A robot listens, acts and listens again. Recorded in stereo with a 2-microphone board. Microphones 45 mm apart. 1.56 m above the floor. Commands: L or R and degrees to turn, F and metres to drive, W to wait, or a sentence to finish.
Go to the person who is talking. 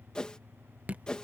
W
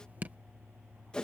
W
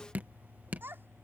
R55
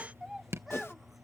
F1.0
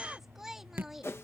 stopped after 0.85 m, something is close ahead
Something is in my way. I am facing the child speaking but have not reached it.